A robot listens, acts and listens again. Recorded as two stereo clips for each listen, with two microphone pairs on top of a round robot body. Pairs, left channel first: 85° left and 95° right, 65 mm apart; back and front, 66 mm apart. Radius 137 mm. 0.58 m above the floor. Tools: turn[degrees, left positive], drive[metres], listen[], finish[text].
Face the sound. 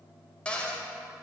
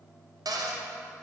Thought: The cupboard door: 15° left.
Action: turn[15]
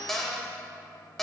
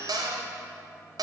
Action: finish[Facing the cupboard door, 1 to 2 m away.]